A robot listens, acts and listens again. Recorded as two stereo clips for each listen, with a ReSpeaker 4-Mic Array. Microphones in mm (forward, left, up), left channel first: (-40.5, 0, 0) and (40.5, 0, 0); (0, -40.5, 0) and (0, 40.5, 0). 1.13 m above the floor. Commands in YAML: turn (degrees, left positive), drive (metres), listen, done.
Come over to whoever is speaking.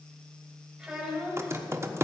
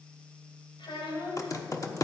turn: -85
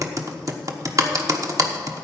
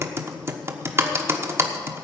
listen: true
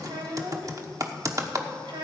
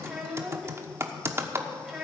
drive: 1.0
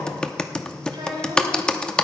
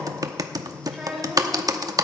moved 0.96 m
drive: 1.0
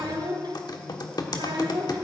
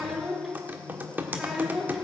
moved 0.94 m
drive: 1.0
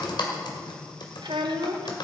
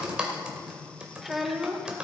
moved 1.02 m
drive: 1.0
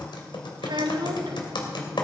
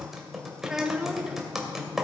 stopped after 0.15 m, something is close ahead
done: "Arrived at the child speaking, straight ahead."